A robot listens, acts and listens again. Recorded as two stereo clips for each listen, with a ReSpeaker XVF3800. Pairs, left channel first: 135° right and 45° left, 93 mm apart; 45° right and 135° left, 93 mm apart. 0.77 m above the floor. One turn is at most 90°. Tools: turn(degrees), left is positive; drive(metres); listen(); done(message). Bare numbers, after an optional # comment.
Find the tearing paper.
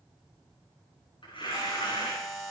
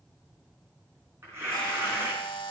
# The tearing paper: 165° right.
turn(-90)
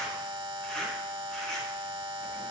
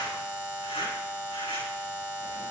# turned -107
# The tearing paper is now 55° right.
turn(-55)
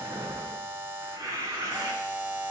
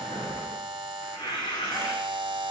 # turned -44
# The tearing paper is now 10° right.
turn(-10)
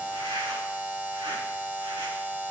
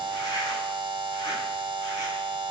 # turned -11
listen()
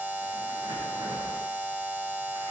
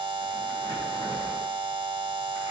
listen()
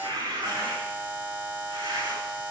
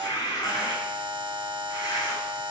done("Facing the tearing paper.")